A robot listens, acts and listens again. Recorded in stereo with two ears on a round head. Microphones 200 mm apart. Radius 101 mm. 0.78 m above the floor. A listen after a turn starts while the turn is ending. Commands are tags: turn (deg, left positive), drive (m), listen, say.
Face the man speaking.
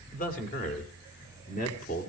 <turn deg="35"/>
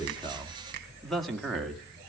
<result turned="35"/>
<say>Found it: a man speaking, straight ahead.</say>